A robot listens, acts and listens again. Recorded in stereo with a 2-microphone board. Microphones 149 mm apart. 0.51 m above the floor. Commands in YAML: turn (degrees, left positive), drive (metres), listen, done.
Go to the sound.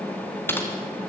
turn: 30
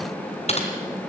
turn: 135
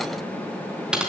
drive: 1.0
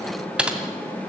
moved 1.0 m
drive: 1.0
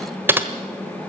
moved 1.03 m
turn: -15
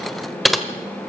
drive: 1.0
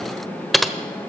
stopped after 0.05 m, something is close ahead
done: "Arrived at the typing on a keyboard, straight ahead."